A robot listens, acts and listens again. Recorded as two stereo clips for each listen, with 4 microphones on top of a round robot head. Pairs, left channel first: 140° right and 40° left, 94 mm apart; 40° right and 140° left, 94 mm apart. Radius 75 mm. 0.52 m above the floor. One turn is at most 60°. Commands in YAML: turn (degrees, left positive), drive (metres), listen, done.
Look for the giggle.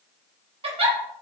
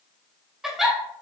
turn: 55
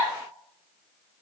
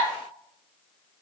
listen: true
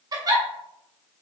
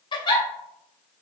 done: "Found it: a giggle, straight ahead, 2 to 4 m away."